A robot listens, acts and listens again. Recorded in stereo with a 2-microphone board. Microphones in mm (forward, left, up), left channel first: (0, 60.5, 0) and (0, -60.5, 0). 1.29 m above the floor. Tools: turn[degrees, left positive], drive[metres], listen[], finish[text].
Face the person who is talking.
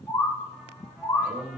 Thought: The man speaking: about 60° right or 120° right.
Action: turn[-60]
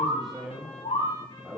Action: finish[Found it: a man speaking, straight ahead.]